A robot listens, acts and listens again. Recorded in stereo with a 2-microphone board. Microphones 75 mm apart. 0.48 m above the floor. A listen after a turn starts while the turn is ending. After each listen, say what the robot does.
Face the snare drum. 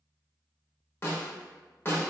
Turn 30° left.
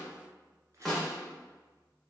Found it: a snare drum, straight ahead.